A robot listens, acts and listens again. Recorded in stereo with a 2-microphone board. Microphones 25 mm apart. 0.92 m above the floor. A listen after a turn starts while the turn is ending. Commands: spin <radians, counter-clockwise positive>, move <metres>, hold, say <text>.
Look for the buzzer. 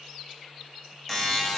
spin 0.52
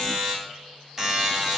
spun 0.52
spin -0.44
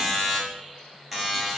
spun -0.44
spin -0.17
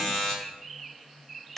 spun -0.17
say Found it: a buzzer, straight ahead.